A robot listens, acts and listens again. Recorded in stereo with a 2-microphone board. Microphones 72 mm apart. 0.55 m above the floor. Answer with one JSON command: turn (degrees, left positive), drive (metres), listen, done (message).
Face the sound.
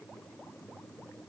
{"listen": true}
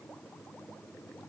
{"listen": true}
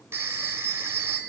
{"turn": -35}
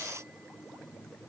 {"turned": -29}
{"listen": true}
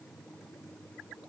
{"listen": true}
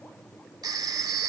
{"turn": -110}
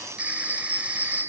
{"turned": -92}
{"turn": -20}
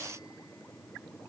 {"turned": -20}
{"listen": true}
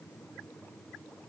{"listen": true}
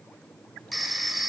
{"done": "Facing the phone ringing, 1 to 2 m away."}